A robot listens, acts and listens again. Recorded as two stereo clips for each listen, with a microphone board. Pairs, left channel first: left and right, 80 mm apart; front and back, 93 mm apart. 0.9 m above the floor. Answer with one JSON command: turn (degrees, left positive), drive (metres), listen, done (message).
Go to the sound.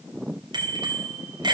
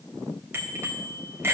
{"turn": -115}
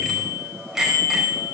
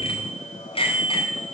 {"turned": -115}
{"drive": 1.0}
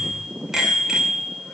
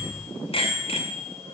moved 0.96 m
{"drive": 1.0}
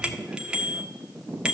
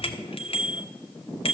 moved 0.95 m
{"turn": -10}
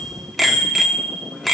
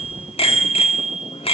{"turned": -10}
{"drive": 1.0}
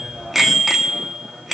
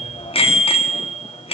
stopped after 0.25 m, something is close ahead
{"done": "I am next to the bicycle bell."}